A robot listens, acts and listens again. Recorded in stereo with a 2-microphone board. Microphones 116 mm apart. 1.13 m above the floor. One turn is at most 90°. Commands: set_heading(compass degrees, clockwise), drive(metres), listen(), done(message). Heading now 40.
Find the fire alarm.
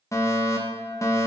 set_heading(10)
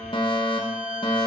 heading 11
set_heading(281)
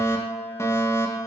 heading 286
set_heading(256)
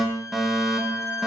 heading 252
done("Found it: a fire alarm, straight ahead.")